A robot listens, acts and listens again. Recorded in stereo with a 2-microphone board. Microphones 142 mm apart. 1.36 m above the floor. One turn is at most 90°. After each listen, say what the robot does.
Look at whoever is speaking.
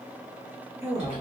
Turn 15° right.
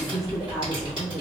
Found it: a woman speaking, straight ahead, 1 to 2 m away.